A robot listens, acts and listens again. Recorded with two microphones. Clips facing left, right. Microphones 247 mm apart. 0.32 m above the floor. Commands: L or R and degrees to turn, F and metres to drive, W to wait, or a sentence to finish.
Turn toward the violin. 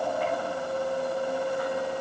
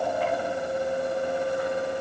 W
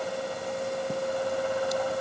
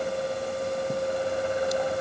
W
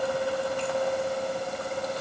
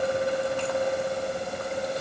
I can't make out a violin.